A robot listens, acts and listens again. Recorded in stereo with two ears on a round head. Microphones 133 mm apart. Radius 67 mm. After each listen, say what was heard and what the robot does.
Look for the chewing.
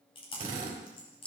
The chewing: about 40° left or 140° left. Turn 40° left.
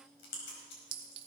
So it is at 100° left. Turn 100° left.
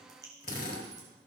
The chewing is now 25° right. Turn 25° right.
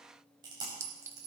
The chewing is now 30° right. Turn 30° right.
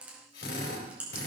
The chewing is now 10° right. Turn 10° right.
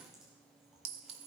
Keep listening.
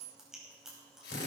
Facing the chewing, over 4 m away.